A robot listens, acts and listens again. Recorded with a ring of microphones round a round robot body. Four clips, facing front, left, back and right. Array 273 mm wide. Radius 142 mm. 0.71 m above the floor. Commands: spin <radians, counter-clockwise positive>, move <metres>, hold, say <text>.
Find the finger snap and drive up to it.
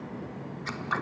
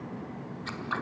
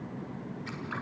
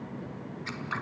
hold
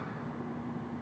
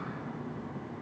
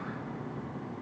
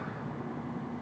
hold
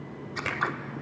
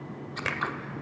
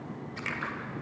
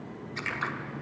spin 1.05
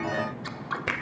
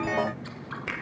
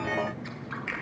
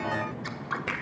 move 1.0
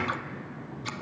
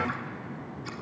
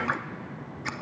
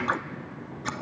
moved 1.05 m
hold
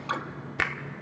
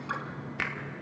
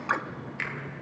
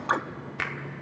move 1.0
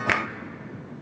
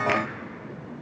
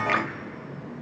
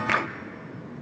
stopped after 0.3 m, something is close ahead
hold
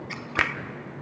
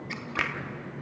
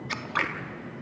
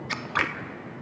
say Arrived at the finger snap, straight ahead.